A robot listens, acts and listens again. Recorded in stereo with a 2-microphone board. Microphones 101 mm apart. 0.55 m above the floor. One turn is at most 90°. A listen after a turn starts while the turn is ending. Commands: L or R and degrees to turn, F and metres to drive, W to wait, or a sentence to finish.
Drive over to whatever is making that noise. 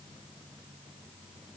W
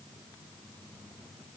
W
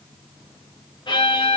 L50
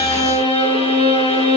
L80
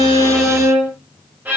R15
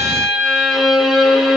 F1.0
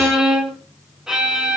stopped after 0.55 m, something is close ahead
Blocked. The violin is further on, straight ahead.